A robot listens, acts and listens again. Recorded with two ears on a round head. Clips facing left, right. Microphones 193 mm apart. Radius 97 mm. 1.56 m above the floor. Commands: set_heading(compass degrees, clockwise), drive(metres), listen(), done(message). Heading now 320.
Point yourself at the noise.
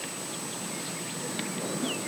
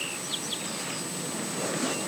listen()
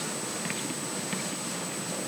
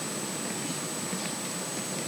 listen()
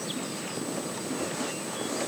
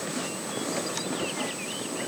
done("I can't make out anything to turn to.")